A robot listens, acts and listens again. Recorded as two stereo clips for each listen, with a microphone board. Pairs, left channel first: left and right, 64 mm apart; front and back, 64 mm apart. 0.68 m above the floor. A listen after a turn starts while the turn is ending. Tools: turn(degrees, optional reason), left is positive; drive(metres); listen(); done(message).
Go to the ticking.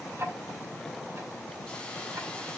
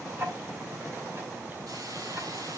turn(degrees=-135, reason="The ticking: 135° right.")
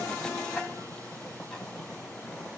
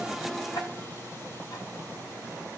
listen()
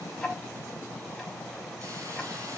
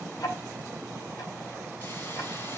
drive(metres=1.0)
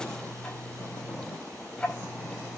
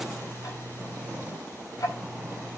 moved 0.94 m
turn(degrees=10, reason="The ticking is now 10° left.")
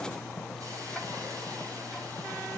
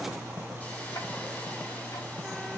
drive(metres=1.0)
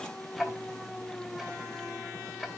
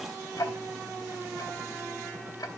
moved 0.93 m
drive(metres=1.0)
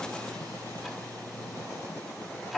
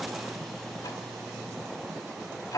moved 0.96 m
drive(metres=1.0)
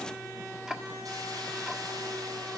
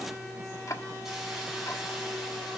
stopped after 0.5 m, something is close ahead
turn(degrees=-10, reason="The ticking is now 10° right.")
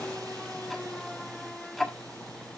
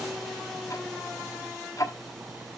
done("Arrived at the ticking, straight ahead.")